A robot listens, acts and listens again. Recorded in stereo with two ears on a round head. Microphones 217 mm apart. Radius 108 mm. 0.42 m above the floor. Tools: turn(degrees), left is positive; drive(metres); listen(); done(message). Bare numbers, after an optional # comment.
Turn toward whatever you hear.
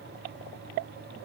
listen()
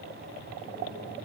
listen()
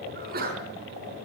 # The sneeze: about 40° right or 140° right.
turn(-40)
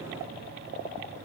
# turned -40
listen()
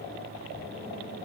done("I heard a sneeze, but can't make it out now. It was about straight ahead or 100° right.")